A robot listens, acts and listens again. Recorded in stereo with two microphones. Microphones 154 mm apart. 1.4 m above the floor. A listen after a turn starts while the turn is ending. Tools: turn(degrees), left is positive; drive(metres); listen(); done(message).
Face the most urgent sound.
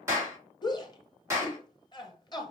turn(degrees=30)
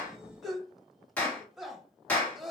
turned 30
done("Facing the shout.")